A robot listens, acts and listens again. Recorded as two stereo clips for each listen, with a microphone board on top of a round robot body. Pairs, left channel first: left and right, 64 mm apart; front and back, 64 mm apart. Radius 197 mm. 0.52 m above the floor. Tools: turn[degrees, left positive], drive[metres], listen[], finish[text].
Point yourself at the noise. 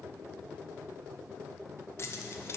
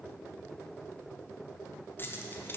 Thought: The keys jangling: 55° left.
Action: turn[55]
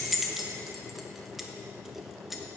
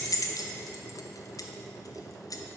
Action: finish[Facing the keys jangling.]